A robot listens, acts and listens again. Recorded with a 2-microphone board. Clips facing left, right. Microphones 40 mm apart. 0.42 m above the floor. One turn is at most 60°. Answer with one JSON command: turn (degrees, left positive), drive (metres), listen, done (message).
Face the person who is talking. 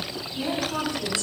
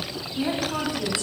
{"turn": -20}
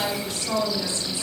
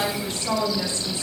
{"turn": -60}
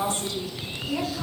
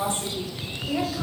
{"turn": -30}
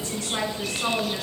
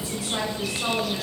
{"done": "Facing the woman speaking, 2 to 4 m away."}